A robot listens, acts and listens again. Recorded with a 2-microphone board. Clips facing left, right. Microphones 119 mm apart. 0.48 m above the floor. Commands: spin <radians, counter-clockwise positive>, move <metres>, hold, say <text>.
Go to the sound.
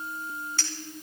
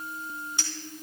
spin -0.26
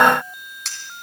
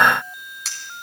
move 1.0
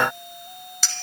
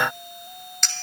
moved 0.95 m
move 1.0
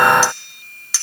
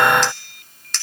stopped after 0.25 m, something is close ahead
spin 0.17
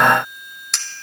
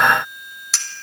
say Arrived at the clink, straight ahead.